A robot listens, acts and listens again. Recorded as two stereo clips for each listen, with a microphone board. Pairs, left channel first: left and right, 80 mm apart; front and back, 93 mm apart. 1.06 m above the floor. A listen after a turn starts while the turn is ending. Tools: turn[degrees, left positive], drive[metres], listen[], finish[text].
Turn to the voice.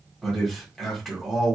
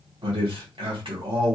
Thought: The man speaking: 175° left.
Action: turn[175]
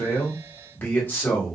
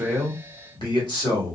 Thought: The man speaking is now 25° left.
Action: turn[25]
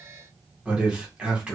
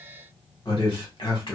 Thought: The man speaking is now 15° right.
Action: turn[-15]
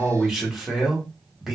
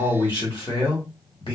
Action: finish[Facing the man speaking.]